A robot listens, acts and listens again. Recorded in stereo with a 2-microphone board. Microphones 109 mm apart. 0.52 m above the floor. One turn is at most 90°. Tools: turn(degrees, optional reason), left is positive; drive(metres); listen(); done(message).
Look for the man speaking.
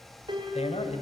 turn(degrees=70, reason="The man speaking: about 70° left or 110° left.")
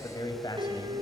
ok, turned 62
turn(degrees=40, reason="So it is at 40° left.")
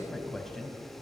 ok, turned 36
done("Facing the man speaking.")